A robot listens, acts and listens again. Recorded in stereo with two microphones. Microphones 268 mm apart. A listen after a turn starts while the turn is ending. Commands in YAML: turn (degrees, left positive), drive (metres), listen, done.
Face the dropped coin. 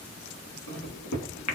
listen: true
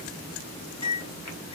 listen: true
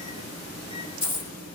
turn: 45
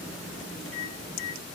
listen: true
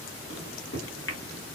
done: "I heard a dropped coin, but can't make it out now. It was about straight ahead or 90° left."